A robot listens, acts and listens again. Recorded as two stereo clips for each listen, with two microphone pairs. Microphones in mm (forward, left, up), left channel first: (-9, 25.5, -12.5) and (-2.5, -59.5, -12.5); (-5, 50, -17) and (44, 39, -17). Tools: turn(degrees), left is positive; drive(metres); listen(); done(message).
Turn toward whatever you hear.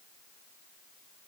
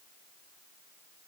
listen()
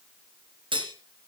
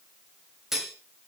turn(degrees=-95)
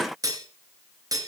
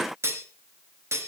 turn(degrees=-40)
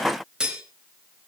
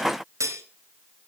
done("Facing the cutlery clinking, 2 to 4 m away.")